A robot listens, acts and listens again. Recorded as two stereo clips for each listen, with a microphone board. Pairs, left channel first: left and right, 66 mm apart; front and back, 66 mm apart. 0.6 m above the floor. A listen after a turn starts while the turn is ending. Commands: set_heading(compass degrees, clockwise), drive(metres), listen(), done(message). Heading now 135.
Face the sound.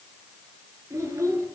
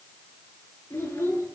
set_heading(185)
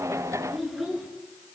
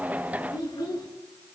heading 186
done("Found it: a child speaking, straight ahead.")